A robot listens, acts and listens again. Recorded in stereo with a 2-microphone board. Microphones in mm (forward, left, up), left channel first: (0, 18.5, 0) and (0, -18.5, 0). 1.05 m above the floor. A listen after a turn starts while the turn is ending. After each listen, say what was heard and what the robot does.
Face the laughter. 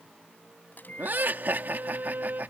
The laughter: about 60° right or 120° right. Turn 60° right.
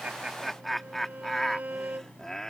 So it is at 15° left. Turn 15° left.
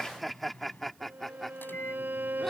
Found it: laughter, straight ahead.